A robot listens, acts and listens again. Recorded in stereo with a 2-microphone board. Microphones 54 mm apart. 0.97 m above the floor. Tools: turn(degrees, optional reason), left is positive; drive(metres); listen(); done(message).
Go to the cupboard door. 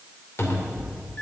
turn(degrees=55, reason="The cupboard door: about 55° left or 125° left.")
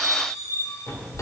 turn(degrees=65, reason="So it is at 65° left.")
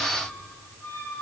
listen()
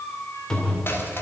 turn(degrees=15, reason="The cupboard door is now 15° left.")
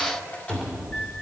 drive(metres=1.0)
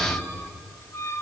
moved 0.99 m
drive(metres=1.0)
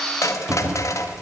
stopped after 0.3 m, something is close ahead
turn(degrees=-10, reason="The cupboard door is now 10° right.")
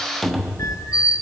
done("I am next to the cupboard door.")